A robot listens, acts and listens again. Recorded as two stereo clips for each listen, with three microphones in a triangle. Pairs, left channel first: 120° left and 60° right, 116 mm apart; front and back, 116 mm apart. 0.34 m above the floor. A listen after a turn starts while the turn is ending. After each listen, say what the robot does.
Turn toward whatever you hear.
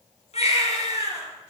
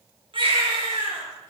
Turn 140° left.
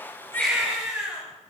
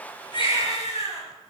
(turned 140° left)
Turn 25° left.
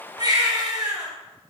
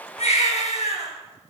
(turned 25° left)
Facing the baby crying, 2 to 4 m away.